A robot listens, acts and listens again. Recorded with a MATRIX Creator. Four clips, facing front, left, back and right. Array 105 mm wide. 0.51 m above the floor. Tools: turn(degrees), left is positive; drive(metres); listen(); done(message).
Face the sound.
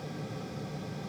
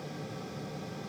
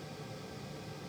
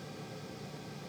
listen()
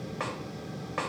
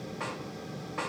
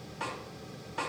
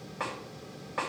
turn(degrees=-25)
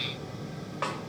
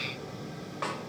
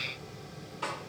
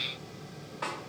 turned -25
turn(degrees=20)
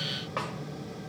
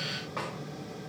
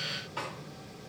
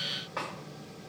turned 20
done("Found it: a snare drum, straight ahead, 2 to 4 m away.")